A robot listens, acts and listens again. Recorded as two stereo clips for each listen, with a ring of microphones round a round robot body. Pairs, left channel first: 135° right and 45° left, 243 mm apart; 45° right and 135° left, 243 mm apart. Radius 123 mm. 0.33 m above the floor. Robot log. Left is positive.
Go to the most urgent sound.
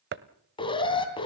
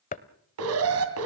note: The alarm: 155° left.
cmd yaw +155
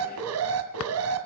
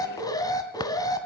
note: The alarm is now 30° left.
cmd yaw +30
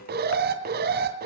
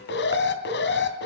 cmd fwd 1.0
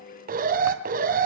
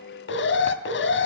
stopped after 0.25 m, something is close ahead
note: The alarm is now 10° right.
cmd yaw -10
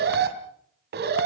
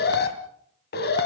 end: Blocked. The alarm is further on, straight ahead.